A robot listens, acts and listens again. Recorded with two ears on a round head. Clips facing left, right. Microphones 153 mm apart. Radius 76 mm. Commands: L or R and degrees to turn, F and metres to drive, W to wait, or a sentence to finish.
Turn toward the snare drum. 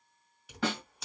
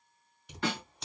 L65
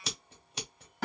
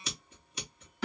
L50
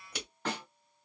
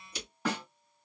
R10
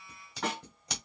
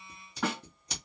Found it: a snare drum, straight ahead.